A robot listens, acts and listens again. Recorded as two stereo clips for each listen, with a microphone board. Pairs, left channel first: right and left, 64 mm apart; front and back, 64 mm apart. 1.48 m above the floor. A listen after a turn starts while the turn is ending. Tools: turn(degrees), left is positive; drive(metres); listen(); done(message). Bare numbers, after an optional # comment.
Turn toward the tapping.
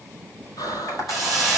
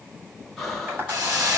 # The tapping: 125° right.
turn(-125)
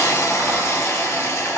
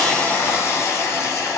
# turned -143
# Nothing new. It was at 15° left.
turn(15)
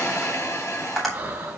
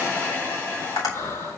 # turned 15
done("Found it: tapping, straight ahead.")